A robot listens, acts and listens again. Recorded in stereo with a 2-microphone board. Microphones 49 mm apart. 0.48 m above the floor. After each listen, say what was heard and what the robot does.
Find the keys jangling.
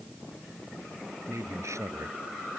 Keep listening.
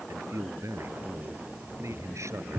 The keys jangling: about 40° right or 140° right. Turn 40° right.
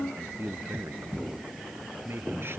So it is at 10° right. Turn 10° right.
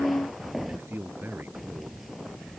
Facing the keys jangling.